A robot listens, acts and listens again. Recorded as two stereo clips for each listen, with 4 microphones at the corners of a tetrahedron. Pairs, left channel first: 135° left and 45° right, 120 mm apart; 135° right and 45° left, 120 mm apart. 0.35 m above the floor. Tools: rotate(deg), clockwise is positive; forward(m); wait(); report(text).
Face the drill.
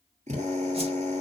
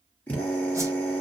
rotate(60)
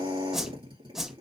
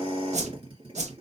report("Facing the drill.")